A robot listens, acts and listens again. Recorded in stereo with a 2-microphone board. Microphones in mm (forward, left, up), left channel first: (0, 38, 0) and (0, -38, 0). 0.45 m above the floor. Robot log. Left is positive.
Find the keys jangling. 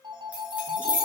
note: The keys jangling: about 20° right or 160° right.
cmd yaw -20
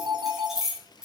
cmd yaw -30
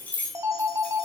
note: So it is at 20° left.
cmd yaw +20
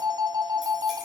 cmd idle
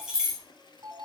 note: The keys jangling is now 10° right.
cmd yaw -10
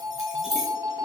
end: Found it: keys jangling, straight ahead, over 4 m away.